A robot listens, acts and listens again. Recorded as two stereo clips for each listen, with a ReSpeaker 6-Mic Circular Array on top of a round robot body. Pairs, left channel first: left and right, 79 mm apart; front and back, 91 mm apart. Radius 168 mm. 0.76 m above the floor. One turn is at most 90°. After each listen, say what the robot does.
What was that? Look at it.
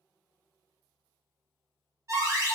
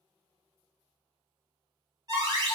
Turn 90° right.
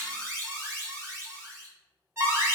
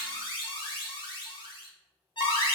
Turn 35° right.
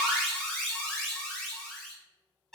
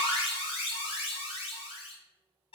Found it: an alarm, straight ahead, under 1 m away.